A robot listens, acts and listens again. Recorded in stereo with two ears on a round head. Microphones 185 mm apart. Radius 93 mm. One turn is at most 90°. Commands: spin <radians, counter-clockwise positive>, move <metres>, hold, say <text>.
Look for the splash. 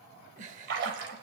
spin -1.05
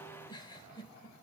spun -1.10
hold
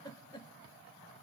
say I heard a splash, but can't make it out now. It was about 5° left or 60° right.